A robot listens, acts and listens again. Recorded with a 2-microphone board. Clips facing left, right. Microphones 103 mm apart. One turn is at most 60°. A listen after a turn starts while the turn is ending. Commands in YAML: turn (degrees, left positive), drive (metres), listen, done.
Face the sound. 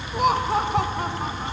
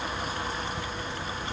turn: 60
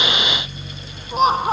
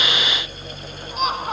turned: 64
turn: 35
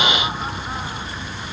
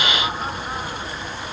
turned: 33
listen: true
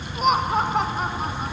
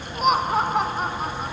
done: "Found it: laughter, straight ahead."